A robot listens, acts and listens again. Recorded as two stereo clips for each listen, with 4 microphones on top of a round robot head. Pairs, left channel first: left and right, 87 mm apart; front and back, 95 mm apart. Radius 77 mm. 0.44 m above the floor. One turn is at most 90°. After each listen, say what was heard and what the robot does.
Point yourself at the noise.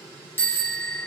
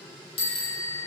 The bicycle bell: 25° left. Turn 25° left.
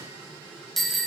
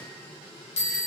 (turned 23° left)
Found it: a bicycle bell, straight ahead.